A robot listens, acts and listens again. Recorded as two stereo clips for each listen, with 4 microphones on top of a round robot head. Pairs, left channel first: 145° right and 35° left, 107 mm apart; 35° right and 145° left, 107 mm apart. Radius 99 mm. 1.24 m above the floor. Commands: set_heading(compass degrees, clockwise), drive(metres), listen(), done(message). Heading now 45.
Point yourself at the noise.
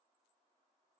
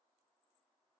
listen()
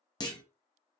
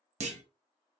set_heading(245)
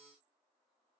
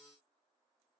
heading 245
done("I heard a clunk from this way, but can't make it out now.")